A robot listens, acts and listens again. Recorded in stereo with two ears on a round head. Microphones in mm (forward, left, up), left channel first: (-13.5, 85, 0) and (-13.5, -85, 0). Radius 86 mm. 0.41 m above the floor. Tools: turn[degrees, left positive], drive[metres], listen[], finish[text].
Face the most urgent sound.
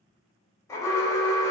Thought: The alarm: about 15° left or 165° left.
Action: turn[15]
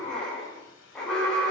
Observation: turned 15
Action: finish[Found it: an alarm, straight ahead, 1 to 2 m away.]